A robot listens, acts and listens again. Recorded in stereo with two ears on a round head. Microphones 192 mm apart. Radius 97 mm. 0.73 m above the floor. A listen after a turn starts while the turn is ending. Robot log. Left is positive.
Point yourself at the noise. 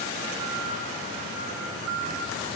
cmd idle
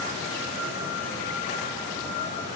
cmd idle
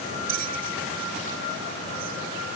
note: The bell: about 65° right or 115° right.
cmd yaw -65
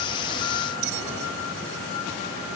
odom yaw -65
note: So it is at 35° right.
cmd yaw -35
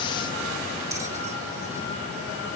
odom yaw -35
cmd idle
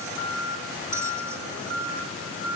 cmd idle
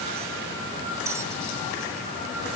end: I heard a bell from this way, but can't make it out now.